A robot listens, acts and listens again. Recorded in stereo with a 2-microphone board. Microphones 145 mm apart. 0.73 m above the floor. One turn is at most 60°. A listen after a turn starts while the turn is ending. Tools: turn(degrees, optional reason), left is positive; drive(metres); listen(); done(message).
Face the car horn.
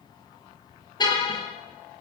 turn(degrees=30, reason="The car horn: about 30° left or 150° left.")
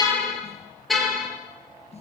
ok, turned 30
done("Facing the car horn, over 4 m away.")